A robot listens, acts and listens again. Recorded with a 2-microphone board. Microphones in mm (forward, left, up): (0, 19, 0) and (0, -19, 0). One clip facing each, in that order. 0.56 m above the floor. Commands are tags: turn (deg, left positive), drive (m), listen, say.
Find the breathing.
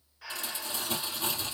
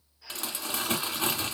<turn deg="70"/>
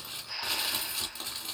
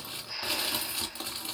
<turn deg="10"/>
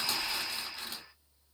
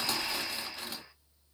<listen/>
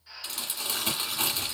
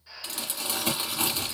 <say>Facing the breathing, under 1 m away.</say>